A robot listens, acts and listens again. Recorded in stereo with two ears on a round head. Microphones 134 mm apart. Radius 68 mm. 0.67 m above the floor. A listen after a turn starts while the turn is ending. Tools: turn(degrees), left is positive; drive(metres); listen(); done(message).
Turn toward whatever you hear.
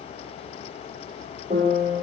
turn(degrees=-45)
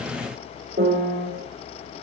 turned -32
turn(degrees=-100)
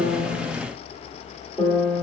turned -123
turn(degrees=20)
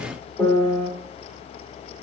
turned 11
turn(degrees=10)
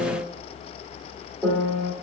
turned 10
done("Found it: a piano, straight ahead, 1 to 2 m away.")